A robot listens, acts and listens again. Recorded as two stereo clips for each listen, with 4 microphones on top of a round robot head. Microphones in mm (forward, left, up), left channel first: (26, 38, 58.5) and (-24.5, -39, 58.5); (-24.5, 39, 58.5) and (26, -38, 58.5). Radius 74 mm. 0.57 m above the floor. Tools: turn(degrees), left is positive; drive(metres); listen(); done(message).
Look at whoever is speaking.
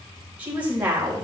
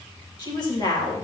turn(degrees=165)
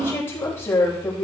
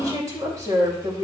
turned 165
done("Found it: a woman speaking, straight ahead.")